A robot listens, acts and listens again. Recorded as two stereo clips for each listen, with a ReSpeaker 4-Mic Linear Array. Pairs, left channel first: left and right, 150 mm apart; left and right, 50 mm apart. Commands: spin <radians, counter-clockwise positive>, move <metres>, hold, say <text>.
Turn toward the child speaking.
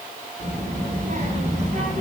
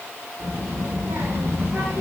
spin -1.13
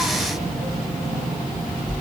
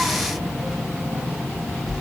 say Found it: a child speaking, straight ahead.